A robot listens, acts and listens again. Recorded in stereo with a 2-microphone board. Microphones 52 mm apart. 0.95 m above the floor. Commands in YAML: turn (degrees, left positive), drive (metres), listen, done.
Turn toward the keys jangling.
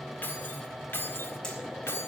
turn: 55
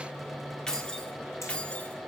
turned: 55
turn: 25
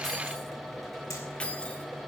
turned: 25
turn: 25
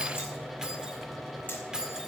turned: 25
turn: -15
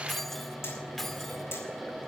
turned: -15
done: "Found it: keys jangling, straight ahead, 1 to 2 m away."